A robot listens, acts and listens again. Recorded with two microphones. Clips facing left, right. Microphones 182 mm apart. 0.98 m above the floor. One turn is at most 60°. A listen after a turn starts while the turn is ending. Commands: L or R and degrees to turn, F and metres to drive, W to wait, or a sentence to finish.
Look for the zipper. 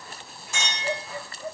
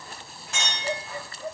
W
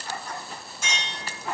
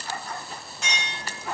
W
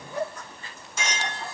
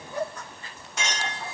I can't make out a zipper, only a clink.